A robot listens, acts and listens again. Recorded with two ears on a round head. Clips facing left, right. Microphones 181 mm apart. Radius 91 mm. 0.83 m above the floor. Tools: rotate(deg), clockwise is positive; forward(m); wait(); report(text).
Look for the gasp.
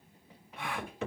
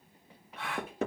rotate(-30)
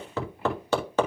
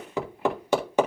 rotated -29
wait()
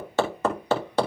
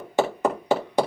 report("I heard a gasp, but can't make it out now. It was about 15° right or 140° left.")